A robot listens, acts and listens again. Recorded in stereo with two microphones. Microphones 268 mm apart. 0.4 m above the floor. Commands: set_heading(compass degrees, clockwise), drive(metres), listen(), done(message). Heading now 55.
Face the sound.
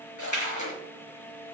set_heading(325)
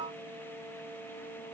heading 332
done("Facing where the splash came from. I can't hear it now.")